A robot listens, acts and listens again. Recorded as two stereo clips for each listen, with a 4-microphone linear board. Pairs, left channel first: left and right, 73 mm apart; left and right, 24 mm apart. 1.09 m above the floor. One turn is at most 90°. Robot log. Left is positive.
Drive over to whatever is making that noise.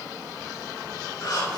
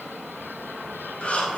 note: The breathing: about 70° left or 110° left.
cmd yaw +70
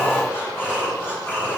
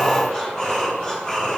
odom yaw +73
note: So it is at 35° left.
cmd yaw +35
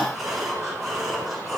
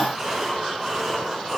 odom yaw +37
cmd fwd 1.0
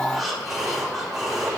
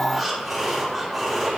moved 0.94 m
cmd fwd 1.0
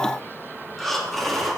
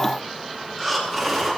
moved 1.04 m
cmd fwd 1.0
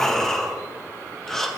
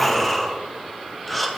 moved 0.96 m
cmd fwd 1.0
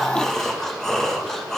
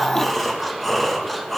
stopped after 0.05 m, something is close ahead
note: The breathing is now 10° left.
cmd yaw +10
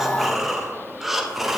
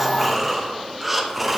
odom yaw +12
end: I am next to the breathing.